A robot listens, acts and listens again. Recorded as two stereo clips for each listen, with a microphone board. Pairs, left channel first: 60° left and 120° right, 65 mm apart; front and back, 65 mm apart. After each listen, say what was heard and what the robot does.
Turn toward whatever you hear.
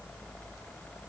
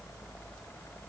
Keep listening.
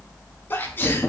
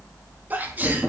The sneeze: 120° left. Turn 120° left.
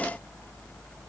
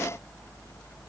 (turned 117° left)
Facing where the sneeze came from. I can't hear it now.